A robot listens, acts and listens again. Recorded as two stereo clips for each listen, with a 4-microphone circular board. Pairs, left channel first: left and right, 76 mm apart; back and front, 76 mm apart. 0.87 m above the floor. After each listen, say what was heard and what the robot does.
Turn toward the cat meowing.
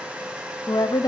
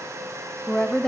Keep listening.
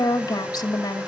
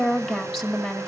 Keep listening.
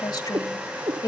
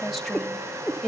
The cat meowing: 85° right. Turn 85° right.
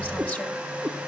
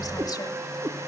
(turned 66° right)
The cat meowing is now 15° right. Turn 15° right.
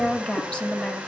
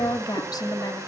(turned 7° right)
Keep listening.
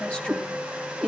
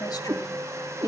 Facing the cat meowing, over 4 m away.